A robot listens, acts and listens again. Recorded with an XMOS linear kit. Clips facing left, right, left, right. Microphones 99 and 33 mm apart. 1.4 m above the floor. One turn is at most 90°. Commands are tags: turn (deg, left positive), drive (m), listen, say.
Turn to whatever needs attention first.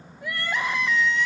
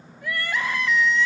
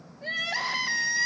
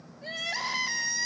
<turn deg="15"/>
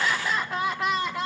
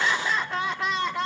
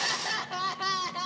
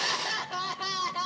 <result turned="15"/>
<say>Found it: crying, straight ahead, 1 to 2 m away.</say>